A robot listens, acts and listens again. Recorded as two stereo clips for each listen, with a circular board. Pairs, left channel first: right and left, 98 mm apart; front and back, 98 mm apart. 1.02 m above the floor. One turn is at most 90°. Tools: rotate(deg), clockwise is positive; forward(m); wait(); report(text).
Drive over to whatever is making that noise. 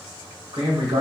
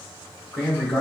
rotate(-70)
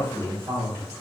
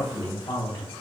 rotate(-35)
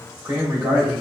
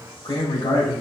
rotate(-20)
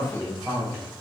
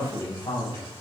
forward(1.0)
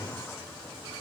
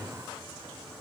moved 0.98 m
wait()
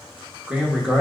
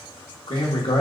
rotate(-10)
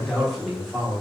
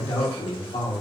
forward(1.0)
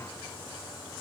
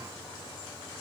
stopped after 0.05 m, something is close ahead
wait()
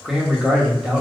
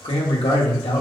report("I am next to the man speaking.")